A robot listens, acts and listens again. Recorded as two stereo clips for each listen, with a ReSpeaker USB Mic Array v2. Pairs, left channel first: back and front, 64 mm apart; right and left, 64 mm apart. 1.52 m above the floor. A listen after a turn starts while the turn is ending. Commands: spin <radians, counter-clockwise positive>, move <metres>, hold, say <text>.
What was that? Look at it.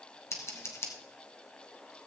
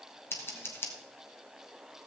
spin -2.44
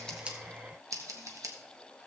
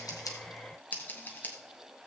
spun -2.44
spin -0.52
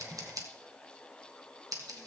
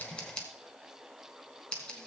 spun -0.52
spin -0.26
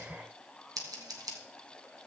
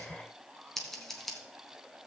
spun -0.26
say Facing the scissors, 1 to 2 m away.